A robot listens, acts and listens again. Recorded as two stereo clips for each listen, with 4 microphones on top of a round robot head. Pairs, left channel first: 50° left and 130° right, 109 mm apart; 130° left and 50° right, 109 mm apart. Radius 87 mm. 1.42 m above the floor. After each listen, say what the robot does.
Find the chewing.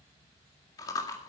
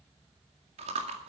Turn 15° right.
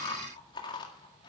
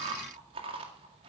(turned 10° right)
Found it: chewing, straight ahead.